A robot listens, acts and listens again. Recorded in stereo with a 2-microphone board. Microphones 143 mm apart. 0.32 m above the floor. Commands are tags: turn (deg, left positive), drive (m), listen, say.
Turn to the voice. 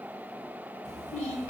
<turn deg="70"/>
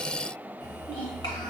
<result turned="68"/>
<turn deg="35"/>
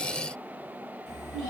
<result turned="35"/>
<say>Found it: a child speaking, straight ahead, 1 to 2 m away.</say>